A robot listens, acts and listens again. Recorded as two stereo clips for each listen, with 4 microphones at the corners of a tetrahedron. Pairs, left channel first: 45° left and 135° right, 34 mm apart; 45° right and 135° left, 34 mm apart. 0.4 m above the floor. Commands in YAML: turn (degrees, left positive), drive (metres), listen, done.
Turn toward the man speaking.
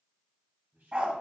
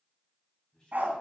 turn: -110
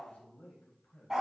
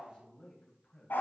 turn: 30
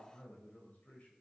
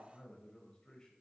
turn: 15
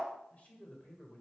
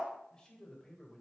turn: 15
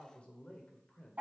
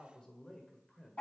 turn: 20
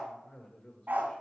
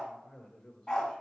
done: "Facing the man speaking."